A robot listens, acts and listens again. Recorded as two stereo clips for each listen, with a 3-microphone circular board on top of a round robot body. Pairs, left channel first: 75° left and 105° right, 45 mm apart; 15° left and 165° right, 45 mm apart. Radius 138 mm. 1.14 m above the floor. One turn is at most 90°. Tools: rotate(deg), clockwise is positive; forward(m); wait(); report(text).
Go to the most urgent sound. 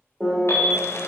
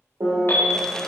rotate(-55)
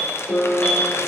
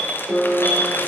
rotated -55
rotate(-15)
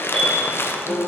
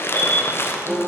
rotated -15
forward(1.0)
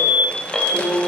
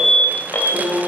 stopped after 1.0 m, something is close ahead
report("I am next to the alarm.")